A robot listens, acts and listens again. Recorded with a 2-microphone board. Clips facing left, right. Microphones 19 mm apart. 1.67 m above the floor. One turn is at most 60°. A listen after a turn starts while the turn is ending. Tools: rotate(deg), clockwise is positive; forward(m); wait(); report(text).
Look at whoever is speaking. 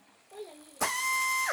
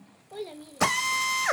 rotate(55)
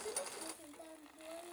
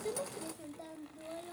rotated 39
rotate(60)
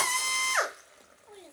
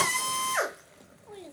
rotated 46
rotate(20)
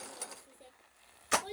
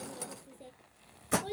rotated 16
report("Found it: a child speaking, straight ahead.")